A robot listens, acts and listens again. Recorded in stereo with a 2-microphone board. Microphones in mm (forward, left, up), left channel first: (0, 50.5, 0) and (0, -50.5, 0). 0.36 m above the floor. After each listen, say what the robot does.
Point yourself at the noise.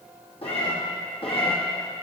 Turn 65° left.
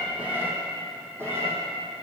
Turn 25° right.
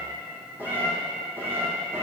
Turn 25° right.
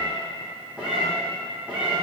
Turn 10° right.
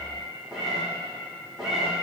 Found it: a cat meowing, straight ahead, 2 to 4 m away.